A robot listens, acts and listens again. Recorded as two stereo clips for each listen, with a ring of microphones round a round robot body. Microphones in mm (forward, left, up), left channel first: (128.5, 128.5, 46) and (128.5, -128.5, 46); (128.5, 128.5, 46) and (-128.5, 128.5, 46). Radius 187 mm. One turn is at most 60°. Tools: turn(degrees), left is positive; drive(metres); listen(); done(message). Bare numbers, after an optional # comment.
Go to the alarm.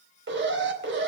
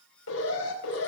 # The alarm: 50° right.
turn(-50)
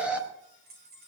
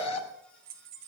drive(1.0)
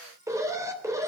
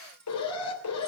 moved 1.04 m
# The alarm is now 10° right.
turn(-10)
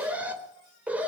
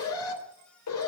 drive(1.0)
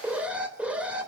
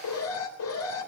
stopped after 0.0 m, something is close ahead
done("Something is in my way. I am facing the alarm but have not reached it.")